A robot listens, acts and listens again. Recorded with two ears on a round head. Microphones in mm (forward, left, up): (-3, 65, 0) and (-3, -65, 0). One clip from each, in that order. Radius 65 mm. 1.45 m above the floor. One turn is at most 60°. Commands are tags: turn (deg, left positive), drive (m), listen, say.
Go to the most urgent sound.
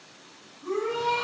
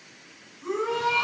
<turn deg="-60"/>
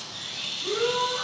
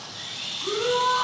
<turn deg="-50"/>
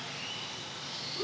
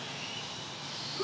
<turn deg="10"/>
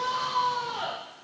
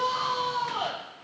<drive m="1.0"/>
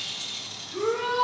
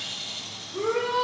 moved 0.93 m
<drive m="1.0"/>
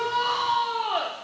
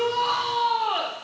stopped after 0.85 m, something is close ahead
<say>I am next to the shout.</say>